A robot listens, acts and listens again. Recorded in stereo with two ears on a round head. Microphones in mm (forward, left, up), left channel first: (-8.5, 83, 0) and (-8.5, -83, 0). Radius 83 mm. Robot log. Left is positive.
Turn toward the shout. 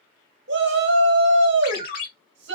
note: The shout: about 60° right or 120° right.
cmd yaw -60
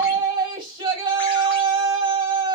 note: So it is at 30° right.
cmd yaw -30
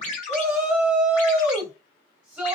note: The shout is now 10° right.
cmd yaw -10
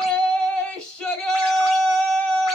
end: Found it: a shout, straight ahead.